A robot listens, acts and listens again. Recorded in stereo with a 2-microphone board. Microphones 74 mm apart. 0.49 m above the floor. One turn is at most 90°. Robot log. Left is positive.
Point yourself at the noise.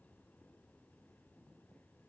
cmd idle
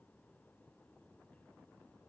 cmd idle
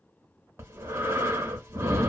note: The breathing: about 35° right or 145° right.
cmd yaw -35
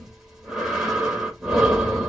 end: Found it: breathing, straight ahead, 1 to 2 m away.